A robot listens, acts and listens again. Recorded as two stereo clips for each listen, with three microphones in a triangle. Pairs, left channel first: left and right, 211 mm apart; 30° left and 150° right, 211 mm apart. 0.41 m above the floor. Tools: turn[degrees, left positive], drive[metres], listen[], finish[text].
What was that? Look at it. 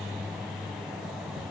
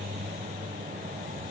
Action: listen[]
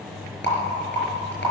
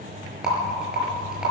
Thought: The rattle: 125° left.
Action: turn[125]
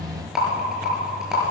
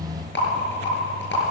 Action: finish[Facing the rattle, over 4 m away.]